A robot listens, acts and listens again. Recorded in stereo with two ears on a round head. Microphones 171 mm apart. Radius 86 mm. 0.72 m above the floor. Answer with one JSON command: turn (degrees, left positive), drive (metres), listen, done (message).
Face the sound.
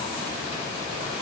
{"listen": true}
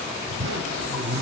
{"turn": -60}
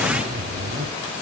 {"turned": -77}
{"turn": -40}
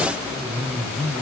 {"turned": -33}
{"turn": -10}
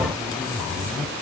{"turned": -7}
{"done": "Found it: a zipper, straight ahead."}